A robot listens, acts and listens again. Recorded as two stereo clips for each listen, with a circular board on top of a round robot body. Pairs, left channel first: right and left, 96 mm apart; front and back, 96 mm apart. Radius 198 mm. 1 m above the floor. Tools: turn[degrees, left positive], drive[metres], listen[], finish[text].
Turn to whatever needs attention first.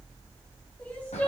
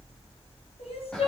Thought: The crying: 15° right.
Action: turn[-15]
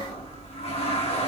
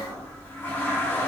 Action: listen[]
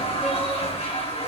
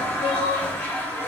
Action: finish[Facing the crying.]